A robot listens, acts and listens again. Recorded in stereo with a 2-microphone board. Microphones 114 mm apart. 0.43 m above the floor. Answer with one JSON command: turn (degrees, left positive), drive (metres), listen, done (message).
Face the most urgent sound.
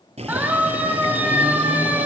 {"turn": -15}
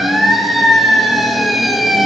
{"done": "Facing the siren."}